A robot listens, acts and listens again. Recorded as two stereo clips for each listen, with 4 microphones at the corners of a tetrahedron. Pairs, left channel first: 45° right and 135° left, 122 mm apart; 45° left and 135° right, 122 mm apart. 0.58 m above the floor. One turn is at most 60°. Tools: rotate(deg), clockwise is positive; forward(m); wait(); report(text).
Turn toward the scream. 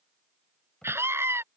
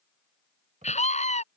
rotate(-60)
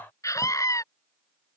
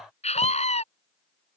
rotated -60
rotate(-20)
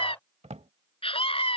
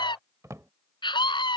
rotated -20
report("Facing the scream.")